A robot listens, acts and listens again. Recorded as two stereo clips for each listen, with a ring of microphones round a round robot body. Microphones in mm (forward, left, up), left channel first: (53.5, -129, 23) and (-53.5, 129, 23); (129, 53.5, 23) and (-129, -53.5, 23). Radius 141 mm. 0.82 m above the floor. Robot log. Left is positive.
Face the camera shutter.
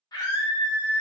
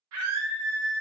cmd idle
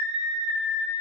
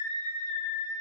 cmd idle
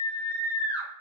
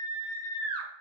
end: I can't make out a camera shutter, only a scream.